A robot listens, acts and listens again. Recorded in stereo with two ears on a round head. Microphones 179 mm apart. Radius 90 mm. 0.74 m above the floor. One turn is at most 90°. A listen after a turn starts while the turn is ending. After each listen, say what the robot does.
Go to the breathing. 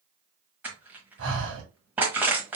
Turn 65° right.
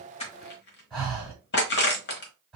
Drive 1.0 m forward.
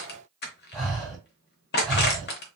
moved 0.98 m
Drive 1.0 m forward.
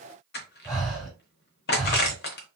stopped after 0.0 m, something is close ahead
I am next to the breathing.